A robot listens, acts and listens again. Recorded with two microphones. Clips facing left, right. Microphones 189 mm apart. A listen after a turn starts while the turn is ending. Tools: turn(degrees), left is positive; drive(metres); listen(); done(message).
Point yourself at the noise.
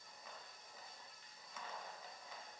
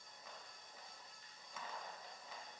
listen()
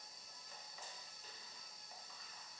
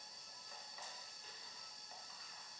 listen()
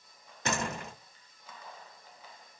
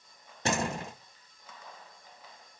turn(degrees=-30)
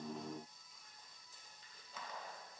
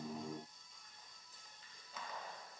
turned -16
listen()
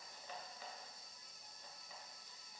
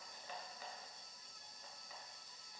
done("I heard a door slam, but can't make it out now. It was about 15° right or 135° right.")